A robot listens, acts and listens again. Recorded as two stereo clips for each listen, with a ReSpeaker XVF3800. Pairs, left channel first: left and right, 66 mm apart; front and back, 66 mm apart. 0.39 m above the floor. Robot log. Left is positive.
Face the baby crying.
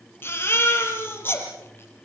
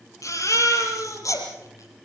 note: The baby crying: 35° left.
cmd yaw +35
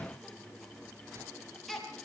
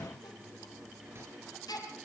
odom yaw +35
end: Found it: a baby crying, straight ahead.